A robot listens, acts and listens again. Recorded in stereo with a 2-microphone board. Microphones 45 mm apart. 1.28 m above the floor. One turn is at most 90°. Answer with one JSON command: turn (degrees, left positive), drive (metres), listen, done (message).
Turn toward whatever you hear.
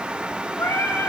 {"turn": 90}
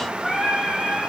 {"done": "Found it: singing, straight ahead."}